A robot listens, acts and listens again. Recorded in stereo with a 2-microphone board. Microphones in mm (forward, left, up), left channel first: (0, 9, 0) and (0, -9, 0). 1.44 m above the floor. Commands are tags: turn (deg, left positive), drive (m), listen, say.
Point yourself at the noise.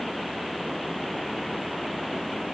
<listen/>
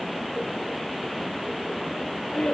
<turn deg="65"/>
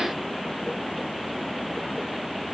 <listen/>
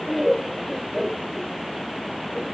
<say>Found it: laughter, straight ahead.</say>